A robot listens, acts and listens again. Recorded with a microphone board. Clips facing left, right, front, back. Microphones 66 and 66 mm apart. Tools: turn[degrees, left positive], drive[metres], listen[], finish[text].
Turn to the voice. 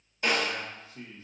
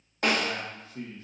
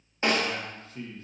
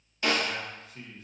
Thought: The man speaking: 100° right.
Action: turn[-100]
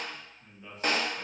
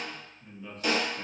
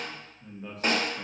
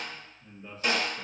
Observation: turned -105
Thought: The man speaking is now 10° left.
Action: turn[10]
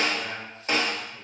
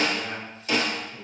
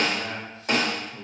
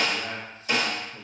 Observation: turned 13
Action: finish[Found it: a man speaking, straight ahead.]